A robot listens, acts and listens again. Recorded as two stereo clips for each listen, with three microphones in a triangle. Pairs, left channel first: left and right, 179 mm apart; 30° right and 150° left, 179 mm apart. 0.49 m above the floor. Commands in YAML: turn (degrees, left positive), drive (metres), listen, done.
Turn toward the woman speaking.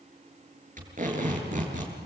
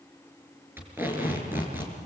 listen: true
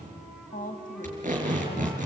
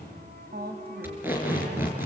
turn: 130
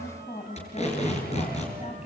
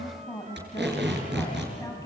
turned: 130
turn: 40
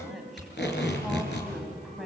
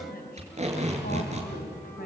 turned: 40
done: "Facing the woman speaking."